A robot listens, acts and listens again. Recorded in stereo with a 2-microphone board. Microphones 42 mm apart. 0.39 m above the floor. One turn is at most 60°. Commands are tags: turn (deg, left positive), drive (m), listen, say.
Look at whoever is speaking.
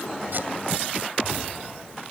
<listen/>
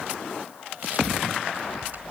<listen/>
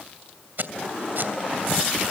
<say>I can't make out anyone speaking to turn to.</say>